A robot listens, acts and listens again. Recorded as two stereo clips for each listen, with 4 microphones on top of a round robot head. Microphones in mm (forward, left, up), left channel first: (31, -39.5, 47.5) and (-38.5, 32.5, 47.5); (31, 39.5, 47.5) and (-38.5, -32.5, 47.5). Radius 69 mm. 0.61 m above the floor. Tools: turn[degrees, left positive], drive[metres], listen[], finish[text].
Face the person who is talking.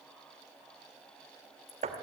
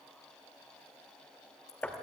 Action: listen[]
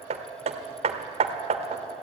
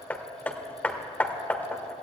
Action: listen[]
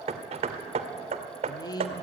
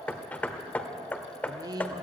Thought: The woman speaking: 90° right.
Action: turn[-90]
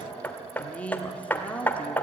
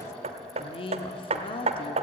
Thought: The woman speaking is now 30° left.
Action: turn[30]
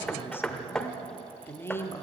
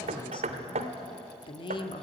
Thought: The woman speaking is now 20° left.
Action: turn[20]
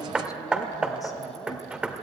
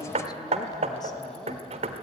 Action: listen[]
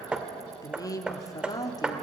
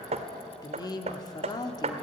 Action: finish[Facing the woman speaking, 1 to 2 m away.]